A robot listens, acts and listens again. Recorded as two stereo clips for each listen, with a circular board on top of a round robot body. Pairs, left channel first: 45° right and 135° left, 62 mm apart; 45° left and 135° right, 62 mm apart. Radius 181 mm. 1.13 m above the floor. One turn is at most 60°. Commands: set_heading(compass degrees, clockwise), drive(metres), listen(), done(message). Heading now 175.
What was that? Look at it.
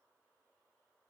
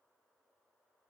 listen()
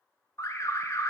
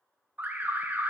set_heading(235)
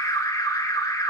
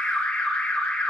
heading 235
set_heading(265)
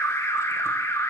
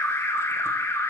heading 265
done("Facing the alarm.")